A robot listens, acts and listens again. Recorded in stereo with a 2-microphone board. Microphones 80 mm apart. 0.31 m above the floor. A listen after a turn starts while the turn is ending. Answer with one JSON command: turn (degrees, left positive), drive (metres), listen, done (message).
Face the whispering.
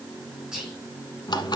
{"turn": -30}
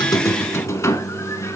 {"listen": true}
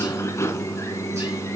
{"listen": true}
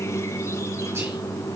{"done": "I heard whispering, but can't make it out now. It was about 20° left or 140° right."}